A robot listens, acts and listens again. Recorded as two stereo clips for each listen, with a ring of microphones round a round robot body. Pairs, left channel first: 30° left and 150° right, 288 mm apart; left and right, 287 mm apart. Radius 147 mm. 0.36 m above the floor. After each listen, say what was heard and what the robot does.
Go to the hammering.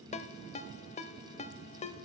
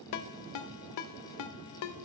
Keep listening.
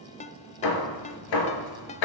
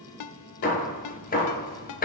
The hammering: 30° left. Turn 30° left.
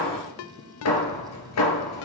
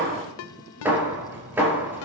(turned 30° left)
Drive 1.0 m forward.
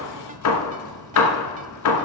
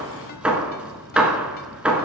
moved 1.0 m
Drive 1.0 m forward.
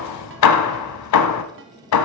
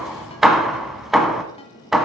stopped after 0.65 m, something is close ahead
Arrived at the hammering, straight ahead.